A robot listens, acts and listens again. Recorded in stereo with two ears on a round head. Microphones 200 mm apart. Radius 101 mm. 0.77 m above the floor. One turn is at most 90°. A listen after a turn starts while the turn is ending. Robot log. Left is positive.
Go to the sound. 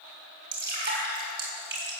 note: The dripping: about 50° right or 130° right.
cmd yaw -50
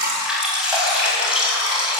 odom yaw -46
cmd fwd 1.0
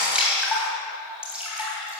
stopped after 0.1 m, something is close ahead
end: Blocked. The dripping is further on, straight ahead.